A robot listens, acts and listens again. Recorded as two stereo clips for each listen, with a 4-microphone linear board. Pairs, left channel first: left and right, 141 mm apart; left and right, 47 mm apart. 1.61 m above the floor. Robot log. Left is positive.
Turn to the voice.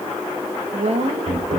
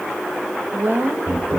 note: The woman speaking: about 50° right or 130° right.
cmd yaw -50
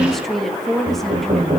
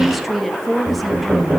end: Facing the woman speaking, 2 to 4 m away.